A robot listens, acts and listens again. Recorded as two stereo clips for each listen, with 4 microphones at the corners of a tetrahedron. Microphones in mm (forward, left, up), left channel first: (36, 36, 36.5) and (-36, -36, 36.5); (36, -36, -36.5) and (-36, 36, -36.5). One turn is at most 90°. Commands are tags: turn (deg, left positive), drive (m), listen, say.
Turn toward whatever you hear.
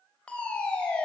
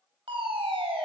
<turn deg="90"/>
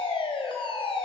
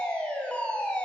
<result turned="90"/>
<turn deg="30"/>
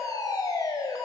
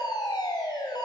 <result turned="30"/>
<say>Found it: a fire alarm, straight ahead, 2 to 4 m away.</say>